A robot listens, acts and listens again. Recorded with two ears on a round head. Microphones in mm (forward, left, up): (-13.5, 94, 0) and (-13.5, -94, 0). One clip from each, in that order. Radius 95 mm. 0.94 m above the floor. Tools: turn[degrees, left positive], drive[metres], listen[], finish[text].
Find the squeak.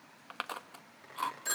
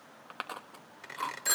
Thought: The squeak: about 60° right or 120° right.
Action: turn[-60]
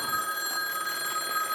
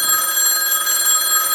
Action: listen[]
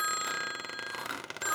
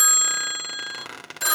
Action: finish[Found it: a squeak, straight ahead, 2 to 4 m away.]